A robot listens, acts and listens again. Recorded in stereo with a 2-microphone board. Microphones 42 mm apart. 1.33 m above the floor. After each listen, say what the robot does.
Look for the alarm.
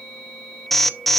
Turn 30° left.
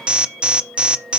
Turn 25° right.
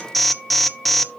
Facing the alarm, under 1 m away.